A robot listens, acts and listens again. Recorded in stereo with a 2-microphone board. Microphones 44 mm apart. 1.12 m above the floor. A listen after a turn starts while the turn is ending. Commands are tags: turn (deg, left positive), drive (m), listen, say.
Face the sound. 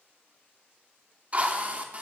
<turn deg="-30"/>
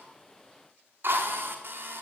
<turn deg="-120"/>
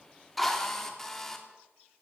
<say>Found it: a drill, straight ahead, 2 to 4 m away.</say>